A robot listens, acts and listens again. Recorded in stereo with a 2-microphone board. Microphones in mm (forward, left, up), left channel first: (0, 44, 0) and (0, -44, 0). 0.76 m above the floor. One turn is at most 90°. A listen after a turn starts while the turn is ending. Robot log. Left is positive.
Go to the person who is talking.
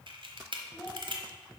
cmd yaw +30
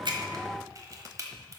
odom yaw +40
cmd idle
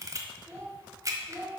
note: So it is at 35° right.
cmd yaw -35
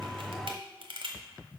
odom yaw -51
note: Nothing new. It was at 15° left.
cmd yaw +15
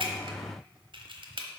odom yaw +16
cmd idle
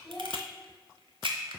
cmd fwd 1.0
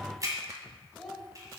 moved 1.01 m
cmd fwd 1.0
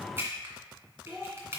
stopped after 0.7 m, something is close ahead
end: Arrived at the child speaking, straight ahead.